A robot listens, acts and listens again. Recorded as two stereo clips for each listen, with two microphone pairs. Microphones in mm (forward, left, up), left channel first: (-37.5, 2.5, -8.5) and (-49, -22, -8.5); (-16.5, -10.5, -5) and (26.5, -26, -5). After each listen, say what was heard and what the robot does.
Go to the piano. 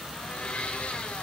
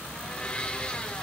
Keep listening.
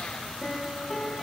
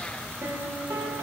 The piano: 10° right. Turn 10° right.
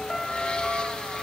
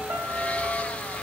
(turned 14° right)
Drive 1.0 m forward.
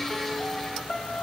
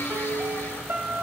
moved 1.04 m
Drive 1.0 m forward.
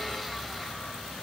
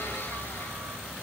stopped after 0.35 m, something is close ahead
Keep listening.
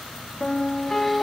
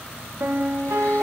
Arrived at the piano, straight ahead.